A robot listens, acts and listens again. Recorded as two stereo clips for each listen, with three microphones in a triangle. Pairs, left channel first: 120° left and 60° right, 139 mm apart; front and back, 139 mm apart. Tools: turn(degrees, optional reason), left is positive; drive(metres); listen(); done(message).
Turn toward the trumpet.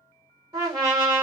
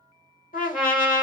done("Found it: a trumpet, straight ahead, 1 to 2 m away.")